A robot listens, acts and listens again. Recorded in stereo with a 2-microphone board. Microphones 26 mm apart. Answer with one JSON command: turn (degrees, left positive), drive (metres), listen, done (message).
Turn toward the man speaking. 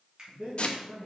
{"turn": -75}
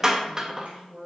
{"turn": -45}
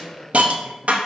{"listen": true}
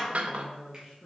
{"turn": -25}
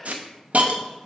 {"listen": true}
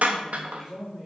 {"turn": -25}
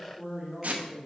{"turn": -10}
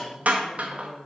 {"done": "Facing the man speaking."}